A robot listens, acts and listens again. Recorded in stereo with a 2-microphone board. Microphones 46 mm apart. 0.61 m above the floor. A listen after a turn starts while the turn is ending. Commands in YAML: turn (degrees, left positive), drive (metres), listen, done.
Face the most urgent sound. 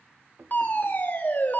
turn: 50
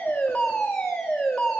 turn: 10
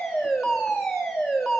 done: "Found it: a fire alarm, straight ahead, over 4 m away."